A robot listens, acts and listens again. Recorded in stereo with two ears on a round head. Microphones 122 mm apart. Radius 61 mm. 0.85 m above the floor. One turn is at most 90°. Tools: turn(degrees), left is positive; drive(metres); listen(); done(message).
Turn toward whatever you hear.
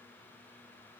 listen()
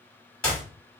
turn(degrees=30)
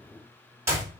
turn(degrees=-20)
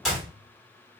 done("Found it: a clap, straight ahead.")